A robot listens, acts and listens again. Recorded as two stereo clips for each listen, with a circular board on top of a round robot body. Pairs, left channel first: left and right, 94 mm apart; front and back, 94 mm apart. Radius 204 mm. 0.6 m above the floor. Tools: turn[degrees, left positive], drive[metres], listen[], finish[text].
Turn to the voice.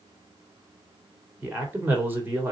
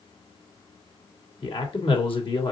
Thought: The man speaking: 20° right.
Action: turn[-20]
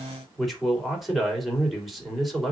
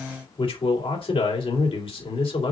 Action: finish[Facing the man speaking, 2 to 4 m away.]